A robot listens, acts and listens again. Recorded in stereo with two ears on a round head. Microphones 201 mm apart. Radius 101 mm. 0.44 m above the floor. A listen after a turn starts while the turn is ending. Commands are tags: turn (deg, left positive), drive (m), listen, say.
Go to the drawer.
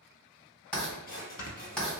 <turn deg="45"/>
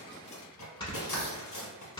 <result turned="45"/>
<turn deg="90"/>
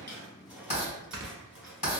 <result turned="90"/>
<drive m="1.0"/>
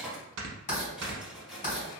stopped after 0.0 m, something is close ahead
<say>Something is in my way. I am facing the drawer but have not reached it.</say>